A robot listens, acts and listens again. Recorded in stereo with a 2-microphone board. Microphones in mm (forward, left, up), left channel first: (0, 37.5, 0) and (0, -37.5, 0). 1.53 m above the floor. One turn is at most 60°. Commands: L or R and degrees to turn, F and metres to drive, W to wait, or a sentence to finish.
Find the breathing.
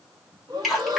R60
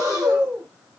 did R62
R50
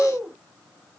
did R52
Found it: breathing, straight ahead.